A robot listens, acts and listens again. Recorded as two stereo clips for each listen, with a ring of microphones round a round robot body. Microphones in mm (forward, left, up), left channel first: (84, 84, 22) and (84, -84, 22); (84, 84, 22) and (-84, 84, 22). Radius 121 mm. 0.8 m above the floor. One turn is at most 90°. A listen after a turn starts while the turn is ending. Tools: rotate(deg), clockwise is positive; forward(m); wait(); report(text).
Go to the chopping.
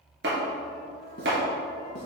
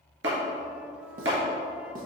rotate(90)
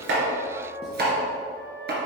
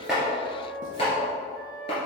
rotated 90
rotate(70)
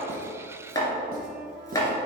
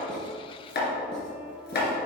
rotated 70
rotate(-20)
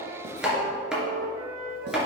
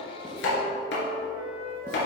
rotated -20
forward(1.0)
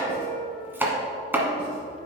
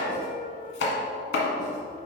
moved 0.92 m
rotate(10)
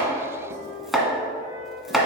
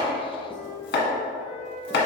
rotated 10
forward(1.0)
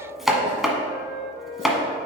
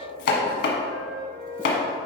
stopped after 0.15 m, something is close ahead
report("Arrived at the chopping, straight ahead.")